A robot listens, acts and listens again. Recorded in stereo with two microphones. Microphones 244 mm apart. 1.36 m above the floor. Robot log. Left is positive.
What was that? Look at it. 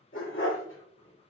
note: The dog barking: about 60° left or 120° left.
cmd yaw +60
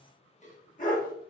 note: So it is at 35° left.
cmd yaw +35
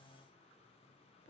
cmd idle
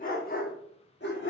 note: The dog barking is now 50° left.
cmd yaw +50
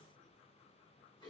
cmd idle
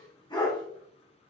note: The dog barking is now 20° left.
cmd yaw +20
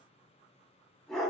end: Facing the dog barking, 1 to 2 m away.